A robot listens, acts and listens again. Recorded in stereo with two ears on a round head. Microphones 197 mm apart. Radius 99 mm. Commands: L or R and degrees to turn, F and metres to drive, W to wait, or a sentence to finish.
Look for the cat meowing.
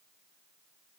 W
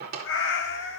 L65
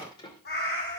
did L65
L45
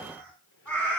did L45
Facing the cat meowing, 2 to 4 m away.